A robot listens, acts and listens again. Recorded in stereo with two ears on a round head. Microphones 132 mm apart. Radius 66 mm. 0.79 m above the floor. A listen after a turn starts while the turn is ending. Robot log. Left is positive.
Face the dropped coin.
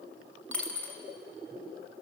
cmd yaw +30
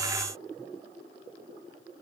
cmd idle
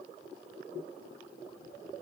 end: I heard a dropped coin, but can't make it out now. It was about 20° right or 140° left.